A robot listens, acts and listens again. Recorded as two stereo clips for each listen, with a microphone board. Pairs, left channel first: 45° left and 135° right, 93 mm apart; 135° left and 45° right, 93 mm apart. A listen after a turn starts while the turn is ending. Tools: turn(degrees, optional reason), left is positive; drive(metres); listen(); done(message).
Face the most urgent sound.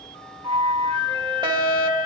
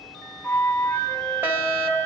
turn(degrees=-110, reason="The fire alarm: 110° right.")
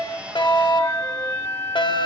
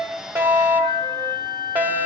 turn(degrees=25, reason="The fire alarm is now 25° left.")
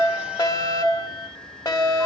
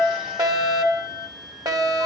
done("Found it: a fire alarm, straight ahead, 2 to 4 m away.")